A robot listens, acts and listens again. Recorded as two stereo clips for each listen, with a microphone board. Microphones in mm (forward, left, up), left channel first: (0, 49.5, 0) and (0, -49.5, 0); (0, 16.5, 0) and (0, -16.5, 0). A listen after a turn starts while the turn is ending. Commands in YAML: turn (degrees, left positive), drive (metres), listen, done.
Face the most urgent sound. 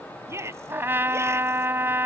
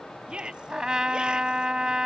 turn: -25
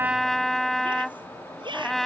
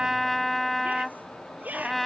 turn: -130
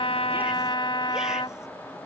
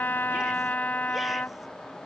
listen: true
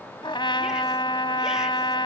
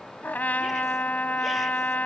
listen: true
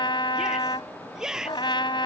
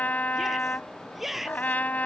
done: "Found it: a shout, straight ahead."